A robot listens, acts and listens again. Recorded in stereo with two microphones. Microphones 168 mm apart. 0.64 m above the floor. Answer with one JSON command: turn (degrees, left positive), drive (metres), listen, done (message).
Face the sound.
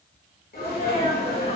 {"turn": 65}
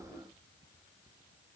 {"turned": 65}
{"listen": true}
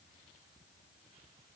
{"done": "I heard a sneeze, but can't make it out now. It was about straight ahead or 50° left."}